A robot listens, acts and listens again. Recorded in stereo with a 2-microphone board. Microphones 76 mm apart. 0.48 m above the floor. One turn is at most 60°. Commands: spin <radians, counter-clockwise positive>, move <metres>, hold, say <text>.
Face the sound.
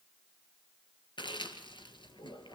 spin 1.05
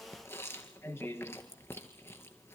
spin 0.52
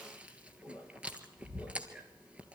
spin -0.26
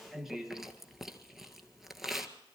say Facing the chewing, 1 to 2 m away.